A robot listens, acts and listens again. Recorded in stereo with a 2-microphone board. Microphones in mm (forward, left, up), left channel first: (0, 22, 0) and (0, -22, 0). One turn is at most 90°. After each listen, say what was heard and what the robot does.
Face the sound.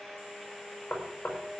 The knocking: about 40° left or 140° left. Turn 40° left.
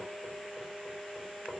Keep listening.
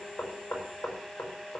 So it is at 105° left. Turn 90° left.
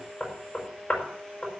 The knocking is now 40° left. Turn 40° left.
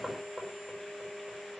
Facing the knocking.